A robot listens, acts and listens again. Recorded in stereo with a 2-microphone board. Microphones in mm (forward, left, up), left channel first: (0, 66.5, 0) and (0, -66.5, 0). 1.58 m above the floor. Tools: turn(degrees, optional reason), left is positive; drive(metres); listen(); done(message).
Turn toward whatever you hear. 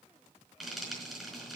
turn(degrees=30)
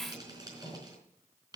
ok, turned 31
turn(degrees=-30, reason="So it is at 30° right.")
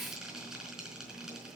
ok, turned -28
done("Facing the frying.")